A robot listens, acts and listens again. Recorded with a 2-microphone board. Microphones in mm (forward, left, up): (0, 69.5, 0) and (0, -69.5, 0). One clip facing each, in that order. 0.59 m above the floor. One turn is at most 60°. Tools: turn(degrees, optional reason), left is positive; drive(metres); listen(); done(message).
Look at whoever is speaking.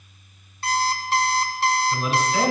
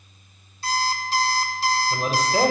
turn(degrees=-40, reason="The man speaking: about 40° right or 140° right.")
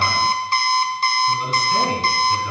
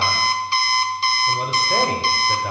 turn(degrees=-60, reason="So it is at 95° right.")
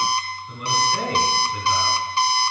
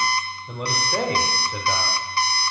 turn(degrees=-60, reason="The man speaking is now 65° right.")
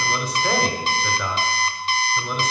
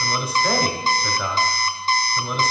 done("Found it: a man speaking, straight ahead.")